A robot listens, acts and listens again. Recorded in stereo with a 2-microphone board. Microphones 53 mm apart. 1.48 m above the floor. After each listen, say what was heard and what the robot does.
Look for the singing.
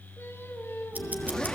The singing: about 55° left or 125° left. Turn 55° left.
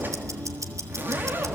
Keep listening.
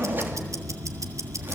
Keep listening.
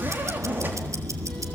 I heard singing, but can't make it out now. It was about straight ahead or 70° left.